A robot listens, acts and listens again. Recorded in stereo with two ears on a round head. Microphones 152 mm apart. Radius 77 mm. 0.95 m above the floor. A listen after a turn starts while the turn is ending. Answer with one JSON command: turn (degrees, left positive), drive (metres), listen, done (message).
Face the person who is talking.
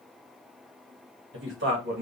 {"turn": -70}
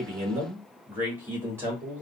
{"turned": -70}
{"turn": -15}
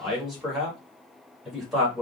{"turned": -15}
{"done": "Found it: a man speaking, straight ahead, 1 to 2 m away."}